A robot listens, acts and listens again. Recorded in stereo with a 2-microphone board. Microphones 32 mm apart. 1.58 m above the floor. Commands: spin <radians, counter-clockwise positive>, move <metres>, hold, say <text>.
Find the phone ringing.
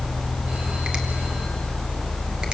hold
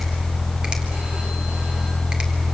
hold
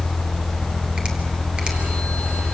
say I can't make out a phone ringing to turn to.